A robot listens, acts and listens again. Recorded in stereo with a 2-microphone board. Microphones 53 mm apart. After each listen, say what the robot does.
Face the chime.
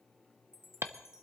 Turn 55° left.
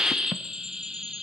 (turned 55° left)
Keep listening.
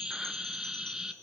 Keep listening.
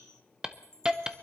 Turn 10° left.
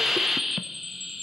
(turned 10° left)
Keep listening.
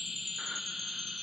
Keep listening.
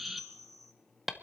Facing the chime, 1 to 2 m away.